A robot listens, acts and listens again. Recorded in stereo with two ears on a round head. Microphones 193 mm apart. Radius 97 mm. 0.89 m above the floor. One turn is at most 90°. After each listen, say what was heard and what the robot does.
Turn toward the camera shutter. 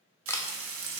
Turn 30° left.
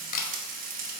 So it is at 135° left. Turn 90° left.
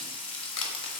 The camera shutter is now 65° left. Turn 65° left.
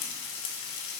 Keep listening.
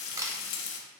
The camera shutter is now 15° right. Turn 15° right.
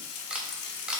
Found it: a camera shutter, straight ahead.